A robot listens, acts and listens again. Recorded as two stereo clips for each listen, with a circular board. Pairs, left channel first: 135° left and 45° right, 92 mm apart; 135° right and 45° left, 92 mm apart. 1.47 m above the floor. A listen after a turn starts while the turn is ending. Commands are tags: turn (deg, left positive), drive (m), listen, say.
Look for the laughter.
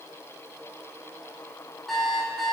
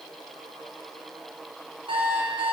<listen/>
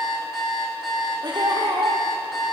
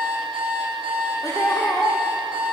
<turn deg="-80"/>
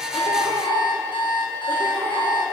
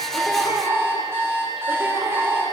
<turn deg="-20"/>
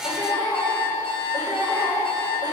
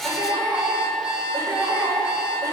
<say>Found it: laughter, straight ahead.</say>